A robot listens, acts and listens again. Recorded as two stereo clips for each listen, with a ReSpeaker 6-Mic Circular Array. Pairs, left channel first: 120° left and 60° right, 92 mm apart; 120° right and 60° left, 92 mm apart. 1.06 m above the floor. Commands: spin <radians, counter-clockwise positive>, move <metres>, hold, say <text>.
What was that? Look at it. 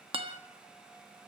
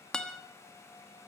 spin -0.61
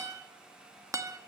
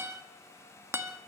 say Facing the guitar, 1 to 2 m away.